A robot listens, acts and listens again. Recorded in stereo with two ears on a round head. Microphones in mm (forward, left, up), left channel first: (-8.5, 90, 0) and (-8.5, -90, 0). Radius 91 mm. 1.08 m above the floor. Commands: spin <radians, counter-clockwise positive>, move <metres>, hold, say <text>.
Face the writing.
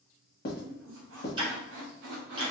spin 0.79
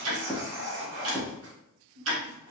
spin 0.17
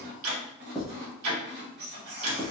say Found it: writing, straight ahead.